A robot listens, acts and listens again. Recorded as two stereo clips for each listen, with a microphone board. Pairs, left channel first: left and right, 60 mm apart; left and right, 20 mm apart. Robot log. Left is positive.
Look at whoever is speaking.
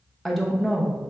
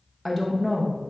cmd yaw +30
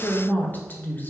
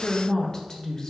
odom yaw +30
note: So it is at 150° left.
cmd yaw +150
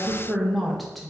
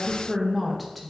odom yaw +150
end: Found it: a woman speaking, straight ahead, under 1 m away.